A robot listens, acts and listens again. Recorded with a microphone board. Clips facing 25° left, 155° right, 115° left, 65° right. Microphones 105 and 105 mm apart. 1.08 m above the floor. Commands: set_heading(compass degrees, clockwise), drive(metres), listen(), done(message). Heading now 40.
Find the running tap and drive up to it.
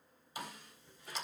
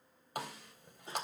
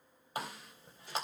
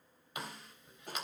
set_heading(235)
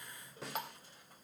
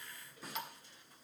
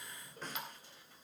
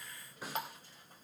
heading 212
set_heading(232)
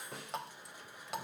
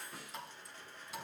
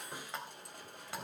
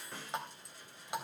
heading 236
drive(1.0)
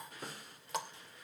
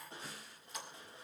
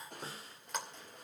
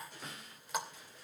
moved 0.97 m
set_heading(221)
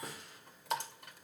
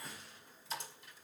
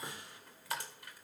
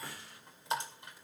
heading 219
drive(1.0)
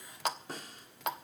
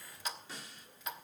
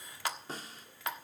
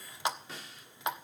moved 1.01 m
drive(1.0)
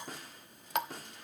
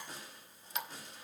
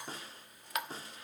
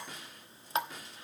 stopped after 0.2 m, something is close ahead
done("I am next to the running tap.")